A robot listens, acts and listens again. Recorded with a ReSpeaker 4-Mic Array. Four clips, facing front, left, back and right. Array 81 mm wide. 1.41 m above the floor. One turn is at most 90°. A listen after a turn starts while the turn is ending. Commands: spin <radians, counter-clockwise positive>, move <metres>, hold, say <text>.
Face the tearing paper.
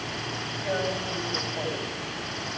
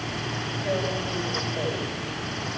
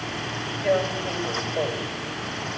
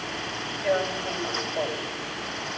spin -1.57
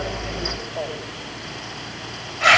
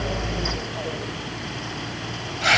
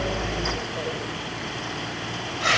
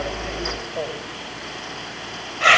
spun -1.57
spin -1.31
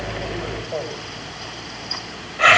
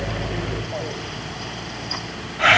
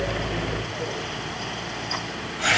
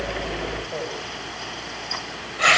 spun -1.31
spin -0.26
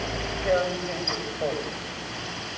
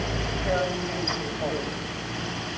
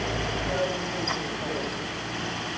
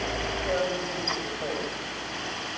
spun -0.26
hold
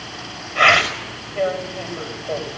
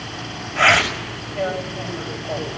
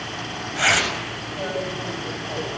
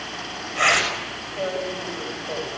say Found it: tearing paper, straight ahead.